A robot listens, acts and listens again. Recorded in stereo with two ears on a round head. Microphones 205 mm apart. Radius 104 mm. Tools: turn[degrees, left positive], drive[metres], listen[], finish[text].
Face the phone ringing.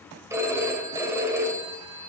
Action: turn[-30]
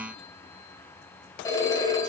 Thought: So it is at 15° left.
Action: turn[15]
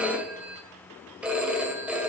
Action: finish[Facing the phone ringing.]